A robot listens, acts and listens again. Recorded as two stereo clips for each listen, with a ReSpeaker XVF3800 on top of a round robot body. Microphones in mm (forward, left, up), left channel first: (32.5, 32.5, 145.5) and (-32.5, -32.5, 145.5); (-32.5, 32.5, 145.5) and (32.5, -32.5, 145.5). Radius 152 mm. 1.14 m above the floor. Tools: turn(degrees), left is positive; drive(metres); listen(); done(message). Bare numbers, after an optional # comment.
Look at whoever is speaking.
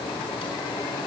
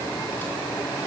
listen()
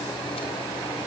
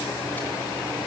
listen()
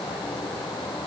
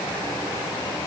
done("I can't make out anyone speaking.")